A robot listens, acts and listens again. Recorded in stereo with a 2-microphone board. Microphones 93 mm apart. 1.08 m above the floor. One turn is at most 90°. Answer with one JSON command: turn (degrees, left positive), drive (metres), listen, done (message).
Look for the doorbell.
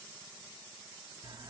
{"listen": true}
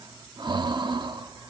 {"listen": true}
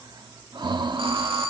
{"turn": -65}
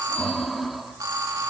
{"turn": -45}
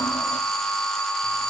{"done": "Facing the doorbell, 2 to 4 m away."}